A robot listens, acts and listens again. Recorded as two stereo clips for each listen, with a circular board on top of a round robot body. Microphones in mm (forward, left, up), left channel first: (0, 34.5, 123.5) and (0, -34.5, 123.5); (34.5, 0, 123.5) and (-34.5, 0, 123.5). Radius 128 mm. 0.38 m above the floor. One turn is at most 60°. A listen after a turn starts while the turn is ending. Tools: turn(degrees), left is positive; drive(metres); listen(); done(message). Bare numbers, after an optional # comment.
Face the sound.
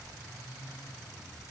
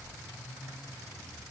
listen()
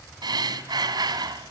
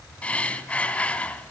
# The breathing: 70° right.
turn(-60)
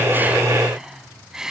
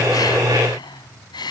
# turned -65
done("Found it: breathing, straight ahead.")